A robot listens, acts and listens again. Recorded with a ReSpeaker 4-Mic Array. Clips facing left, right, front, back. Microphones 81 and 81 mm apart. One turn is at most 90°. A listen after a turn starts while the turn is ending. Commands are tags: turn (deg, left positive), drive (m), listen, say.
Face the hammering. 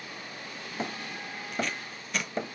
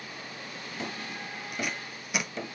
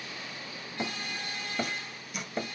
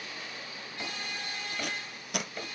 <turn deg="55"/>
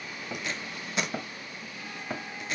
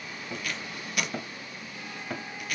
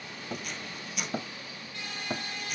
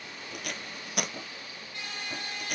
<turn deg="15"/>
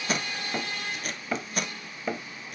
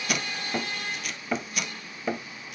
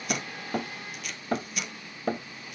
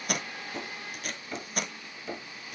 <say>Facing the hammering, 1 to 2 m away.</say>